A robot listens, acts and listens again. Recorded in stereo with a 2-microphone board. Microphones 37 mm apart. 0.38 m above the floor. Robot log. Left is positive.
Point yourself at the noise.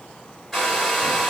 cmd yaw +30
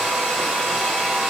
note: So it is at 20° right.
cmd yaw -20
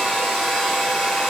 end: Found it: a hair dryer, straight ahead.